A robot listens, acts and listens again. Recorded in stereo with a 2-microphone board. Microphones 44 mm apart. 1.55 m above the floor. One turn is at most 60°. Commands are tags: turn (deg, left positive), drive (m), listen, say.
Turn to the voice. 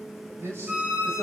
<turn deg="-60"/>
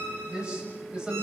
<turn deg="-20"/>
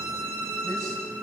<listen/>
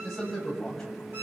<turn deg="10"/>
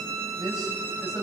<say>Facing the man speaking, over 4 m away.</say>